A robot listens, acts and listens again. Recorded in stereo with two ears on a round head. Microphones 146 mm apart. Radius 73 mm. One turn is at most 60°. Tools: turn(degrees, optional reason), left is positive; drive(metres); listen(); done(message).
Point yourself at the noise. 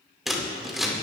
turn(degrees=30)
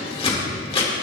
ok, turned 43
turn(degrees=60, reason="So it is at 140° left.")
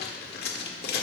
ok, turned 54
turn(degrees=60, reason="The scissors is now 85° left.")
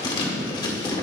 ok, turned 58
turn(degrees=30, reason="The scissors is now 30° left.")
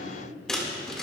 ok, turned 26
done("Facing the scissors, 1 to 2 m away.")